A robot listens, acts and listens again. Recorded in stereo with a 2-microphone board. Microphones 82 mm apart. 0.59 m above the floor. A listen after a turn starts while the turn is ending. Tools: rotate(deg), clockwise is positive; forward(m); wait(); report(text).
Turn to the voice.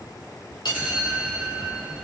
wait()
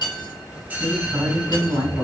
rotate(55)
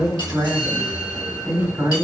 rotate(60)
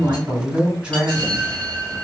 rotate(15)
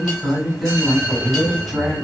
report("Facing the woman speaking, 1 to 2 m away.")